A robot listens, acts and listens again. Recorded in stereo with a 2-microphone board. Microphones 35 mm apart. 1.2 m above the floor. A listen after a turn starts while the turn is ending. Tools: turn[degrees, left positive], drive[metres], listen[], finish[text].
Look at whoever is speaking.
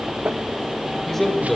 Action: turn[30]
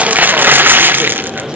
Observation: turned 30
Action: listen[]
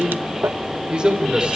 Thought: So it is at 25° right.
Action: turn[-25]
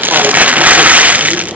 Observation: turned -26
Action: listen[]
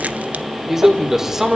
Thought: The man speaking is now 10° right.
Action: turn[-10]
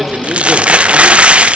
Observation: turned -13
Action: listen[]
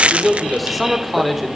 Action: finish[Found it: a man speaking, straight ahead, 2 to 4 m away.]